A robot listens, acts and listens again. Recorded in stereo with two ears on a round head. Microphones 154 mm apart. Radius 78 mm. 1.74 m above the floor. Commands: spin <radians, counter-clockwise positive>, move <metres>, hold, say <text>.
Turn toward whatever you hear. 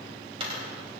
spin -0.61
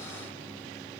hold
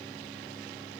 say I heard a dropped coin, but can't make it out now. It was about straight ahead or 110° right.